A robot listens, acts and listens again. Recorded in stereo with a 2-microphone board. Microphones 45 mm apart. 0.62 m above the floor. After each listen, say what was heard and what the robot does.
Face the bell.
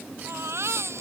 Keep listening.
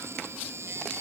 Keep listening.
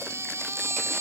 I can't make out a bell to turn to.